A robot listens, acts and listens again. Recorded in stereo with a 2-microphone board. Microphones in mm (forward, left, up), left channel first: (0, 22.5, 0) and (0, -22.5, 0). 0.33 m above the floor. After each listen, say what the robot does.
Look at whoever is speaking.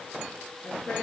Turn 45° left.
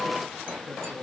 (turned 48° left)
Facing the man speaking.